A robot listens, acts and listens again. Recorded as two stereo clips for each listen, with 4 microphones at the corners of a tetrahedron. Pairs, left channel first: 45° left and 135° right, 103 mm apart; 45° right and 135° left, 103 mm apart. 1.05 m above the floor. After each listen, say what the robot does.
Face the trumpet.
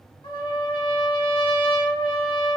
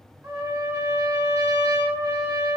Turn 75° left.
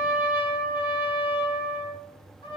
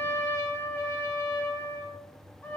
Turn 20° left.
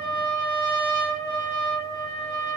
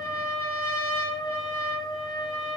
Facing the trumpet.